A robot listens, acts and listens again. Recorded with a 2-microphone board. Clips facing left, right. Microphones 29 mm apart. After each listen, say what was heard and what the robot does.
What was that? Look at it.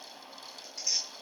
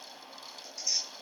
Turn 90° left.
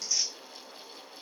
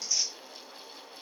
Found it: tearing paper, straight ahead.